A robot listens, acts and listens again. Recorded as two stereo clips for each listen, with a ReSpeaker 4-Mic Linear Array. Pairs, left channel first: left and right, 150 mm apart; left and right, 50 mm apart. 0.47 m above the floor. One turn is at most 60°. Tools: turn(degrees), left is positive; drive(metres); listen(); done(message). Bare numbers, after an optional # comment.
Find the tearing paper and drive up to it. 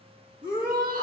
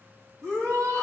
listen()
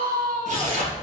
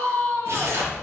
# The tearing paper: about 50° right or 130° right.
turn(-50)
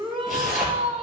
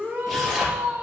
drive(1.0)
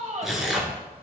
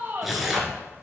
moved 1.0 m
drive(1.0)
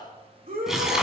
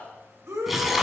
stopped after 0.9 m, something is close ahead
done("Arrived at the tearing paper, straight ahead.")